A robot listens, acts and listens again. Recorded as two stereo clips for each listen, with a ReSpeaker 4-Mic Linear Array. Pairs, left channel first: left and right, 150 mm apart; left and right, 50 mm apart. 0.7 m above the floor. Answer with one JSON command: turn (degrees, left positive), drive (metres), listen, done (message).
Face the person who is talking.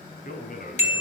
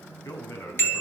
{"turn": 70}
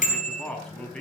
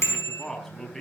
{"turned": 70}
{"done": "Facing the man speaking, over 4 m away."}